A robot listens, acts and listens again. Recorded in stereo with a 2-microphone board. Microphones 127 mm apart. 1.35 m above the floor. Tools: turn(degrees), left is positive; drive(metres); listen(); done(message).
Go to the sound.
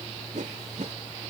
turn(degrees=-90)
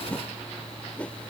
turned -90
turn(degrees=10)
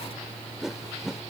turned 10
drive(metres=1.0)
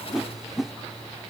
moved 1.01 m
drive(metres=1.0)
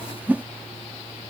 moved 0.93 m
turn(degrees=-15)
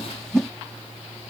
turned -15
drive(metres=1.0)
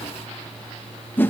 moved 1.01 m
turn(degrees=15)
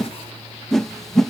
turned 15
drive(metres=1.0)
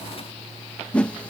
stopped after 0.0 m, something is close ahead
turn(degrees=10)
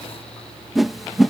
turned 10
done("Arrived at the whoosh, straight ahead.")